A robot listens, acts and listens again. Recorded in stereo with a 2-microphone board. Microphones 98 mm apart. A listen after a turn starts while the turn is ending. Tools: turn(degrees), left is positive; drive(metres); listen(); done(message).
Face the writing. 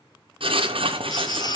turn(degrees=-70)
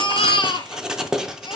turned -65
done("Facing the writing.")